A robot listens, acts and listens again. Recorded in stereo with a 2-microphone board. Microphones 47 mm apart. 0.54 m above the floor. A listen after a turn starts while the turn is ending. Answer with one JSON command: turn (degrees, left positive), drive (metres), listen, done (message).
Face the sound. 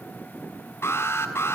{"turn": 65}
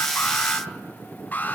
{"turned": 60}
{"turn": 40}
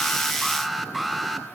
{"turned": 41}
{"done": "Found it: an alarm, straight ahead."}